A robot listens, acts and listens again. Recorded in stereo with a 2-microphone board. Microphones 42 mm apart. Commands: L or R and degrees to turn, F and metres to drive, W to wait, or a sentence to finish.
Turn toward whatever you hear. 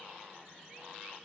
W
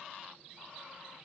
W
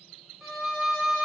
R30
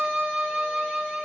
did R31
R145
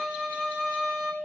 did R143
Facing the violin, 1 to 2 m away.